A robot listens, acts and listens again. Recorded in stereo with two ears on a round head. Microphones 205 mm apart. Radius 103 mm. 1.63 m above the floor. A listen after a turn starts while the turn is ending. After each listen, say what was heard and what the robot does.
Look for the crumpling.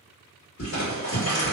The crumpling: about 55° left or 125° left. Turn 55° left.
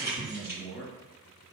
Keep listening.
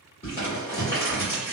So it is at 30° left. Turn 30° left.
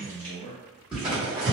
Found it: crumpling, straight ahead.